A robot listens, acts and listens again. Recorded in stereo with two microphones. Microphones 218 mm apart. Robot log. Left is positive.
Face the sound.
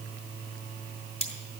note: The cutlery clinking: about 30° left or 150° left.
cmd yaw +30
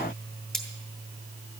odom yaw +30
end: Found it: cutlery clinking, straight ahead, 2 to 4 m away.